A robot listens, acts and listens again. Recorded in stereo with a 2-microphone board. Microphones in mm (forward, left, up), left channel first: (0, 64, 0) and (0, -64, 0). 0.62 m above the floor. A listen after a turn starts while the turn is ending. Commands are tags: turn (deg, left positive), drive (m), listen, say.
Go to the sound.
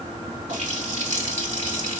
<turn deg="-70"/>
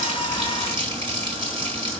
<turn deg="-40"/>
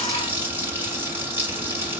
<turn deg="-15"/>
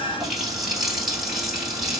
<drive m="1.0"/>
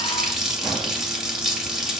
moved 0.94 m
<drive m="1.0"/>
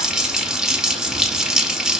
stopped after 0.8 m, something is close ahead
<say>Arrived at the running tap, straight ahead.</say>